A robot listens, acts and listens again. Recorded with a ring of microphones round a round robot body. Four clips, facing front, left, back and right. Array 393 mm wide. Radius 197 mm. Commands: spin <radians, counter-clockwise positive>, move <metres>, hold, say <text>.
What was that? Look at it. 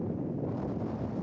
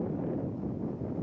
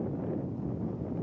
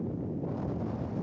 hold
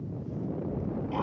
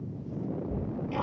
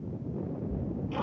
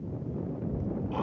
spin 2.09
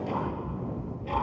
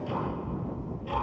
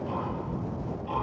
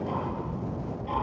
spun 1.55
spin 0.61
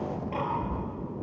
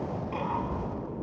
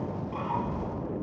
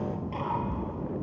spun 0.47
say Found it: ticking, straight ahead.